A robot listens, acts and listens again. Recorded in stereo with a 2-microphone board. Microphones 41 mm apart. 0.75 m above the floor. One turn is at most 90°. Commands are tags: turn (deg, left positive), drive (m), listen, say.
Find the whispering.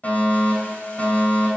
<listen/>
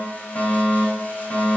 <listen/>
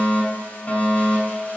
<say>I can't make out whispering, only a fire alarm.</say>